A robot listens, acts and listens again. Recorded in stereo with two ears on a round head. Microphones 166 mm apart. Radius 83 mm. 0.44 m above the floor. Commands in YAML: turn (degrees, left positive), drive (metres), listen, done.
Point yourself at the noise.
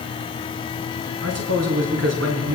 turn: -90
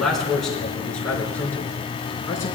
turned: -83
turn: 15
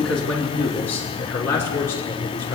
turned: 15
turn: 15
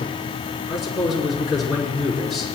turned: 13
done: "Facing the man speaking, over 4 m away."